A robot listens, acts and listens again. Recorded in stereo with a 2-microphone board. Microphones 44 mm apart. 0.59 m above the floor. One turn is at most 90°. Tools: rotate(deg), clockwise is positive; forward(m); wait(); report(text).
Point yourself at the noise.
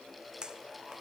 rotate(20)
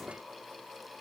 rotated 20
wait()
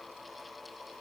report("I heard a pop, but can't make it out now. It was about straight ahead or 140° right.")